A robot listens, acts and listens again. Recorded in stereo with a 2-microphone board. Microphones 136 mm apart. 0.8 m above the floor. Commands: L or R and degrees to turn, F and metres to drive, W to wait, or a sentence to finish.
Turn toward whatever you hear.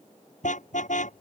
L65
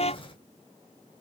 L50
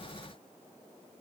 W
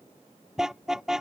Found it: a car horn, straight ahead.